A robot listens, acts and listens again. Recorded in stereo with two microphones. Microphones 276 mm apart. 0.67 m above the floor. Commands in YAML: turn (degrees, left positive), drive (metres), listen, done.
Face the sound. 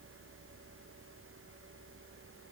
listen: true
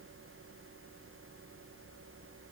listen: true
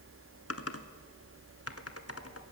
turn: 60
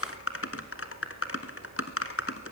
turn: 55
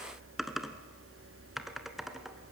done: "Facing the typing on a keyboard, 1 to 2 m away."